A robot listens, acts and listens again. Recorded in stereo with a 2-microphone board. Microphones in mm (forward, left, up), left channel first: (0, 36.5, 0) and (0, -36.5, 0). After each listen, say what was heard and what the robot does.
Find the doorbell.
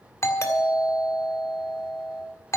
The doorbell: about 40° left or 140° left. Turn 40° left.
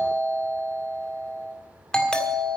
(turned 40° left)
So it is at 10° left. Turn 10° left.
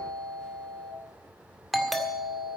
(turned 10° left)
Found it: a doorbell, straight ahead, 1 to 2 m away.